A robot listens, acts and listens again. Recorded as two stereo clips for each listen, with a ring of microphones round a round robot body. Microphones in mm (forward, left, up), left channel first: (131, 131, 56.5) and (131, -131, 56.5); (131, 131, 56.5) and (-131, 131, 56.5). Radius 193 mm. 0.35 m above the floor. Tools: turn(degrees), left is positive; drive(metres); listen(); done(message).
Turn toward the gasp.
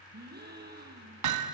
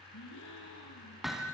turn(degrees=-35)
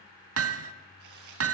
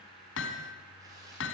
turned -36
done("Facing where the gasp came from. I can't hear it now.")